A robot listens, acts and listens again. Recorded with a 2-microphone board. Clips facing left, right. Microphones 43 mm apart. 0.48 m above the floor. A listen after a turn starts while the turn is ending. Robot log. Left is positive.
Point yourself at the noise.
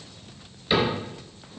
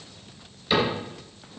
cmd yaw +30
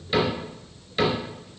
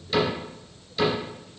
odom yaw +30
note: So it is at 140° left.
cmd yaw +140
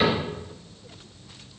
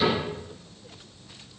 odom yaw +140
cmd idle
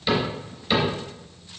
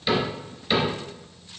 end: Facing the cupboard door.